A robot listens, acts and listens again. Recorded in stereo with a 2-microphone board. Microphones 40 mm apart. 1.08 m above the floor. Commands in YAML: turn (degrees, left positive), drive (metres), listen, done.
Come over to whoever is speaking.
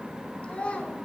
turn: 30
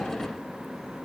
listen: true
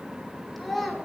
drive: 1.0
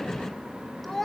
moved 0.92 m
drive: 1.0
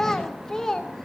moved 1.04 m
turn: 15
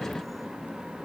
listen: true
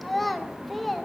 drive: 1.0
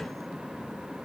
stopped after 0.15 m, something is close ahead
listen: true
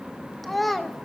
done: "I am next to the child speaking."